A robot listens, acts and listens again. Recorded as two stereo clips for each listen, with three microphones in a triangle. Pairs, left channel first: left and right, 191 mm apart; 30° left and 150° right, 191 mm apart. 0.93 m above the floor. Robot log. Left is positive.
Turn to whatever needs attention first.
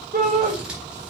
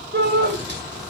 note: The shout: 130° right.
cmd yaw -130
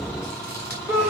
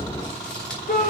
note: The shout is now 15° right.
cmd yaw -15
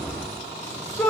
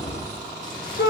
end: Facing the shout, over 4 m away.